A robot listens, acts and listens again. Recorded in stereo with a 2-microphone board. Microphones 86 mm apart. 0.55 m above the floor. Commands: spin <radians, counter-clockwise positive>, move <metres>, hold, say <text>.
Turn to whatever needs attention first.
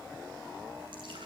hold
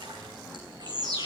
spin -0.87
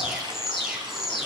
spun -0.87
say Facing the alarm, over 4 m away.